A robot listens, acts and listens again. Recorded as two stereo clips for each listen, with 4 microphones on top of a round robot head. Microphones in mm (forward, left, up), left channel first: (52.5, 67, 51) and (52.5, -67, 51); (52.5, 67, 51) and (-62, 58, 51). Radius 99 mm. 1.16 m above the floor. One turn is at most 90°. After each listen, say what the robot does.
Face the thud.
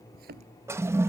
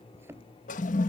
Turn 90° right.
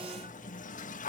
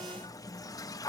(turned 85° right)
Turn 15° right.
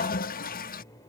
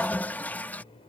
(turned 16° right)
I heard a thud from this way, but can't make it out now.